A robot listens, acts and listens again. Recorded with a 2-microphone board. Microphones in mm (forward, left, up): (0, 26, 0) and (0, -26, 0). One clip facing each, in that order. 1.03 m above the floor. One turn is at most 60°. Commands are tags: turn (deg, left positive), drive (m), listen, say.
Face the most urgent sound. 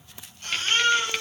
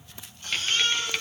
<turn deg="60"/>
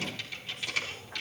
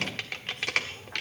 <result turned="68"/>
<listen/>
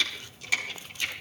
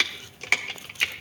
<listen/>
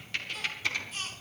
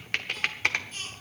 <say>Facing the baby crying, over 4 m away.</say>